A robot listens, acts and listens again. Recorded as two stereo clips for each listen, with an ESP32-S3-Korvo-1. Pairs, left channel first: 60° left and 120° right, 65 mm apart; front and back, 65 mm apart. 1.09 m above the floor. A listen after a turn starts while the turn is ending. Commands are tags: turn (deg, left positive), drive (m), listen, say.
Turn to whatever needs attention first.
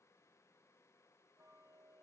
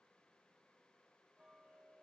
<listen/>
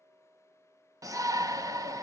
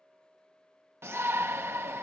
<turn deg="-135"/>
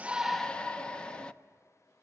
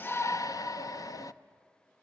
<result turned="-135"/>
<turn deg="-15"/>
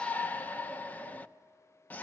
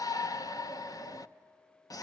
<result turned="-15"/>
<say>Facing the shout, under 1 m away.</say>